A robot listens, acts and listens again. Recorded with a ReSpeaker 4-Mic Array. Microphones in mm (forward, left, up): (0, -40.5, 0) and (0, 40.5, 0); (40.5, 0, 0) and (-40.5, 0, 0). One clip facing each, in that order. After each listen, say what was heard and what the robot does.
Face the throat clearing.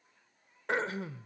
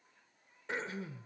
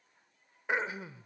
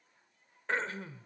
The throat clearing: 80° right. Turn 80° right.
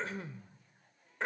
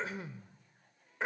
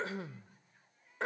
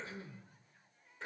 Facing the throat clearing, 1 to 2 m away.